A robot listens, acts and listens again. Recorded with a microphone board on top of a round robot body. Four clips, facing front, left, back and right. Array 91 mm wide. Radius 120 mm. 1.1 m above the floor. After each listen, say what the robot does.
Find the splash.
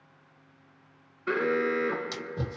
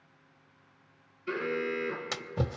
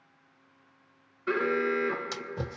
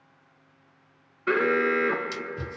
Turn 100° left.
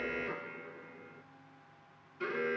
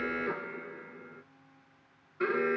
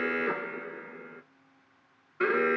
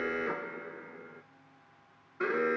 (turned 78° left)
Turn 20° left.
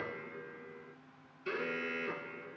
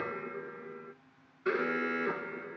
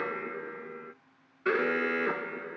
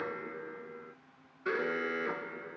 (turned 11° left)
Turn 10° left.
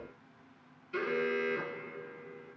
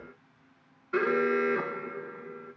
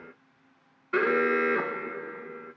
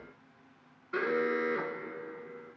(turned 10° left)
Facing where the splash came from. I can't hear it now.